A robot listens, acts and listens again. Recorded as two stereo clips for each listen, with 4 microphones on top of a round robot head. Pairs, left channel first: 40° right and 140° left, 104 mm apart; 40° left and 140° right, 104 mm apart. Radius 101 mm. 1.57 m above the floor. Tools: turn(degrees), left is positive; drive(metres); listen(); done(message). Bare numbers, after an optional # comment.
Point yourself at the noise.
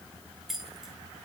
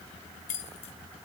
# The keys jangling: 50° left.
turn(50)
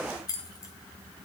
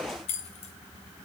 # The keys jangling is now 15° left.
turn(15)
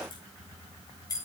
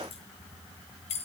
# The keys jangling is now 20° left.
turn(20)
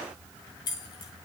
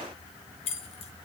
# The keys jangling is now 10° left.
turn(10)
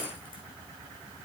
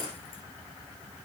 listen()
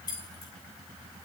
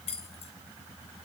# The keys jangling is now 10° left.
turn(10)
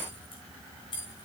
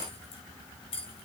done("Found it: keys jangling, straight ahead.")